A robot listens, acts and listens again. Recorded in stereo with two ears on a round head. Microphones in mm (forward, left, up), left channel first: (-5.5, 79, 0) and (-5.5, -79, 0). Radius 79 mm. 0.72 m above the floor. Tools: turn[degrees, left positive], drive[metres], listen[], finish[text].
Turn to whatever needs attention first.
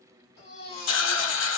Thought: The baby crying: about 35° left or 145° left.
Action: turn[35]
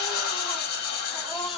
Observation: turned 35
Action: finish[Facing the baby crying, 2 to 4 m away.]